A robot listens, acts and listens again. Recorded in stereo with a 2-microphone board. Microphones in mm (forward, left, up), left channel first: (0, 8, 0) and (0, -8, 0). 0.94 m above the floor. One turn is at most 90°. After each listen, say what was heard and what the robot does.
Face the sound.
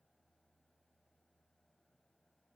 Keep listening.
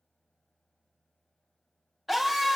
Turn 30° right.
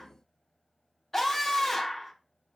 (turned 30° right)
So it is at 20° left. Turn 20° left.
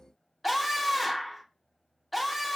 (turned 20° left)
Found it: a scream, straight ahead, under 1 m away.